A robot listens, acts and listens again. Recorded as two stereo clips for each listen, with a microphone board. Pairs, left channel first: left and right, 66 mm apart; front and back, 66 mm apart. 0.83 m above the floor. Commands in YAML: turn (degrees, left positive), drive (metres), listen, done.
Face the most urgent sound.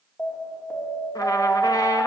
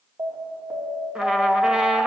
turn: 155
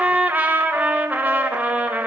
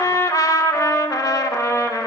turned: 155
listen: true
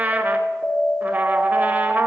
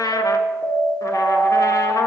turn: 30
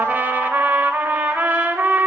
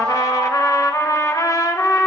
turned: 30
turn: 30
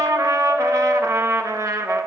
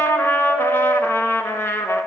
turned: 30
done: "Found it: an alarm, straight ahead, 2 to 4 m away."